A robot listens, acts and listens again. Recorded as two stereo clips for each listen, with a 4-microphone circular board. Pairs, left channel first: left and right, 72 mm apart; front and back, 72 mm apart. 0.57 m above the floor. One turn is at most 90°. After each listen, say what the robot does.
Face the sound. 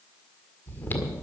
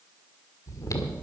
Turn 30° left.
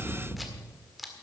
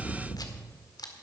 Facing the chewing.